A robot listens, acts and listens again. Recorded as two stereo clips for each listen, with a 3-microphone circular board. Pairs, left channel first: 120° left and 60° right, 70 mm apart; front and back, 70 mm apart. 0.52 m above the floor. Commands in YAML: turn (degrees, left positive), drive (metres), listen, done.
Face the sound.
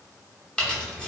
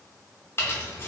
turn: 45
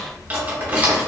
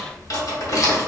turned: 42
done: "Facing the keys jangling, under 1 m away."